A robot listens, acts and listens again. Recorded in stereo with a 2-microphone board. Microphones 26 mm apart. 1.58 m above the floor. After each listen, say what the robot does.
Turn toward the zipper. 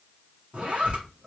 Turn 55° right.
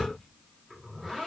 Found it: a zipper, straight ahead.